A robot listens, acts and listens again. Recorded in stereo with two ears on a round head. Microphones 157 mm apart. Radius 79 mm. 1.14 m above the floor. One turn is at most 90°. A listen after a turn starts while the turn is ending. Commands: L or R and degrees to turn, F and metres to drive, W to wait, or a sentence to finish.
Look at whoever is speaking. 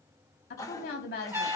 L55
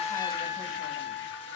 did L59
W
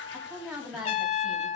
Facing the woman speaking.